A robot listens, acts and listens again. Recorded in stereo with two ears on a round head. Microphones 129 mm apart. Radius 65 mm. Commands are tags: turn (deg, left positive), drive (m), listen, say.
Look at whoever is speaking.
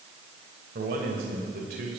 <turn deg="-70"/>
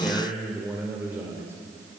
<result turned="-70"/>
<turn deg="-15"/>
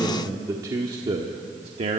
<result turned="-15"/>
<turn deg="-45"/>
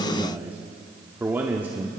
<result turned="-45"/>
<turn deg="-15"/>
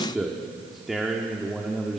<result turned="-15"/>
<say>Facing the man speaking.</say>